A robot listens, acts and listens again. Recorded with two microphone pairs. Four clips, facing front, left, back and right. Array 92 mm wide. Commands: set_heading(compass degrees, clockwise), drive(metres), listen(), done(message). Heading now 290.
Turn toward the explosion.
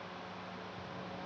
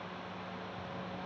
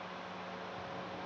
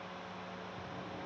listen()
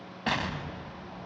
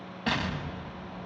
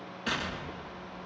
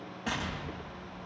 set_heading(270)
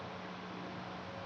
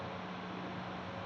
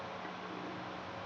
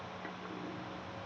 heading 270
done("Facing where the explosion came from. I can't hear it now.")